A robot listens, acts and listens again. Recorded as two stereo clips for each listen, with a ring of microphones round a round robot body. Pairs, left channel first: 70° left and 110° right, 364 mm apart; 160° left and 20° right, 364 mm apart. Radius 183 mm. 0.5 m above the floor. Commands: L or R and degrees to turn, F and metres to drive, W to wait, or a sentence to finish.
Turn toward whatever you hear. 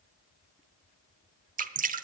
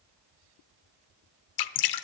L180
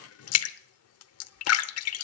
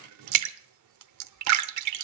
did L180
L20
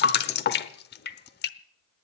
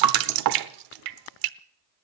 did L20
Found it: dripping, straight ahead.